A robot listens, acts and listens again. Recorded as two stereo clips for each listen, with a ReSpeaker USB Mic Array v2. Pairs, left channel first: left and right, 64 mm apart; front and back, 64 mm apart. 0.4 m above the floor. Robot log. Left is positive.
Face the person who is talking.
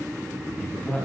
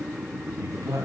note: The man speaking: 160° left.
cmd yaw +160
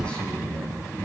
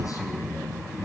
note: The man speaking is now 15° left.
cmd yaw +15
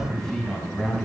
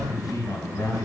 end: Facing the man speaking.